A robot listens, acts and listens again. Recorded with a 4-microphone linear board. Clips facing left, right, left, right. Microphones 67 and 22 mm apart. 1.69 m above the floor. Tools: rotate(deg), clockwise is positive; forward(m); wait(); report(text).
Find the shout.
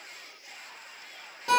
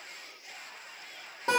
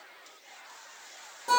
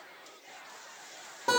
wait()
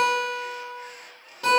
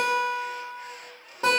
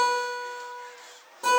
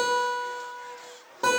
wait()
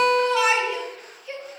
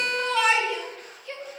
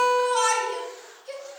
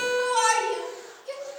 rotate(-30)
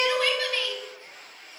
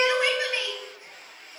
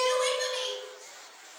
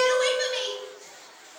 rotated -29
wait()
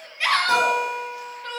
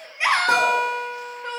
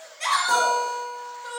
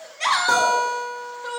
rotate(20)
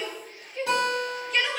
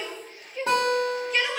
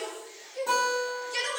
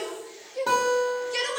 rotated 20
report("Facing the shout, 1 to 2 m away.")